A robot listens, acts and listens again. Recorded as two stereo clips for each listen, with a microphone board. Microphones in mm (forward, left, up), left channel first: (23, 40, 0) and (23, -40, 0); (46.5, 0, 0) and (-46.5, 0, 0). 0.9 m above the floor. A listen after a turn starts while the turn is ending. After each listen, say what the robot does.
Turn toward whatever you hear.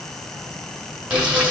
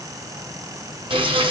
Turn 165° right.
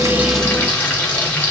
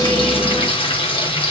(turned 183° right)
Turn 20° left.
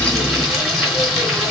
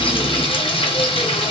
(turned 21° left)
Facing the frying.